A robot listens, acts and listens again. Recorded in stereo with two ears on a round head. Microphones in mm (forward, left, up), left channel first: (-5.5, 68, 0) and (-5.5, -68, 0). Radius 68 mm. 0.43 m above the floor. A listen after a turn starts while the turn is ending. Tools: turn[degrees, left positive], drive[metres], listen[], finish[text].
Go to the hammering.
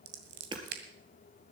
Thought: The hammering: about 30° right or 150° right.
Action: turn[-30]
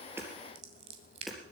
Action: drive[1.0]
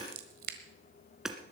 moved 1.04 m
Action: drive[1.0]
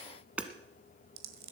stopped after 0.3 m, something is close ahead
Thought: The hammering is now 10° right.
Action: turn[-10]
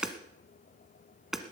Action: finish[I am next to the hammering.]